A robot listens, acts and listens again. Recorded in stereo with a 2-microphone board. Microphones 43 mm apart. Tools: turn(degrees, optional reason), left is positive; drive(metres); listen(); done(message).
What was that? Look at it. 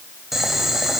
turn(degrees=-30)
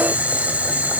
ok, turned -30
turn(degrees=-140, reason="So it is at 140° right.")
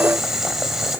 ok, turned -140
turn(degrees=-10, reason="The boiling is now 10° right.")
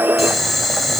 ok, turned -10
done("Found it: boiling, straight ahead, 2 to 4 m away.")